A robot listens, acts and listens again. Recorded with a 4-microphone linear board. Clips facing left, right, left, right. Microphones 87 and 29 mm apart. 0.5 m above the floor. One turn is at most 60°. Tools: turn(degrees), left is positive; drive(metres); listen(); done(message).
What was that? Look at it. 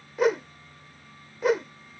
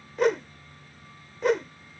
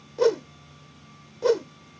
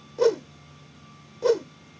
turn(degrees=30)
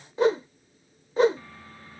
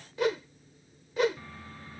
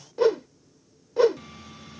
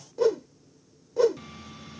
turn(degrees=60)
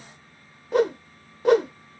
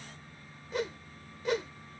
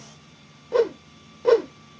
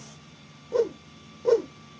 turn(degrees=60)
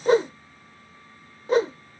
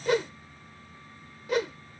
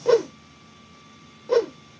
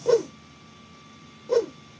turn(degrees=40)
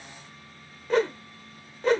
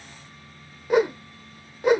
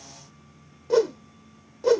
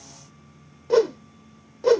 turn(degrees=-15)
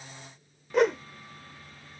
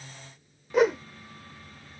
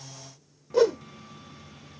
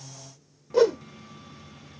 done("Facing the whoosh.")